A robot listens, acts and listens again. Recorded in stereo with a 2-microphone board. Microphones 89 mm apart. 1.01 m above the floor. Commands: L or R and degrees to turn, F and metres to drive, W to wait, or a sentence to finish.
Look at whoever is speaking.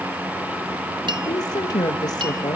L45
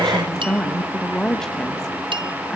L10
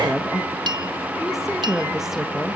Facing the woman speaking.